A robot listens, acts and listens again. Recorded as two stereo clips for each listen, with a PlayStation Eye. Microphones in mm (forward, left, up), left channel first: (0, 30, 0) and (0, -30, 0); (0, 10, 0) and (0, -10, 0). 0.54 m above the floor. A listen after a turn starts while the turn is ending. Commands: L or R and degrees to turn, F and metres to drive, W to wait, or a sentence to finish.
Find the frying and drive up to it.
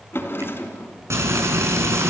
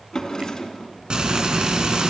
R50
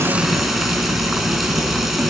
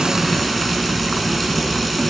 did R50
F1.0
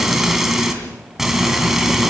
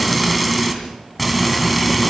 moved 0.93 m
F1.0
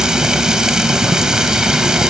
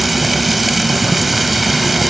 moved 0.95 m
R10
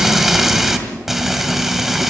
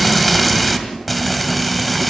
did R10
F1.0
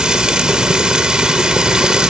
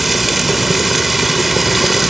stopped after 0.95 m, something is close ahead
R15
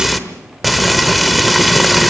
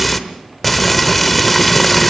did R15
I am next to the frying.